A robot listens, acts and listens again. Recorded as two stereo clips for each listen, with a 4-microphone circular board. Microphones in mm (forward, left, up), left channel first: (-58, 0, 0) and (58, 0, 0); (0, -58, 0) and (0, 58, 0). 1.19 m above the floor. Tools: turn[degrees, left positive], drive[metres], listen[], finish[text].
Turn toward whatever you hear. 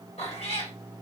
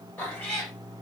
Thought: The cat meowing: 170° right.
Action: turn[-170]
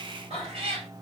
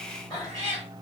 Thought: The cat meowing is now 35° right.
Action: turn[-35]
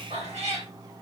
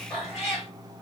Action: finish[Found it: a cat meowing, straight ahead.]